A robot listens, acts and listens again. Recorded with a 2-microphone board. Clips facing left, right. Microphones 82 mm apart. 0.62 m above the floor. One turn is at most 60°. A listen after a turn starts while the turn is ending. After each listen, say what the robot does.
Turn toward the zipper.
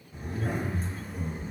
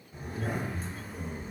Turn 30° left.
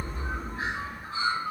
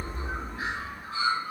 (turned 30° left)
Turn 30° right.
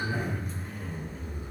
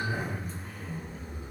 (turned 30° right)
Facing the zipper, 1 to 2 m away.